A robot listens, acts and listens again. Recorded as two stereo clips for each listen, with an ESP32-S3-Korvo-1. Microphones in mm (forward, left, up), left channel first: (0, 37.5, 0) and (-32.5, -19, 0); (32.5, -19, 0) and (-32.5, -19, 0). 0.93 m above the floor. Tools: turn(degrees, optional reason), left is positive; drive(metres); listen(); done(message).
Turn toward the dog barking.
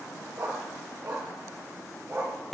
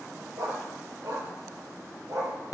turn(degrees=-165, reason="The dog barking: 165° right.")
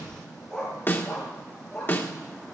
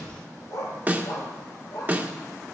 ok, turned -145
turn(degrees=-25, reason="The dog barking is now 25° right.")
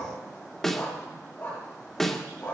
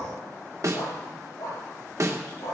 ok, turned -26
done("Facing the dog barking.")